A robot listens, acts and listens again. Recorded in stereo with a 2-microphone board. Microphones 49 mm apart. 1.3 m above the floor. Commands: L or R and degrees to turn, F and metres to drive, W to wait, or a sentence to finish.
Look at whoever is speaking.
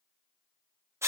W
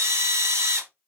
W
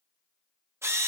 I can't make out anyone speaking, only a drill.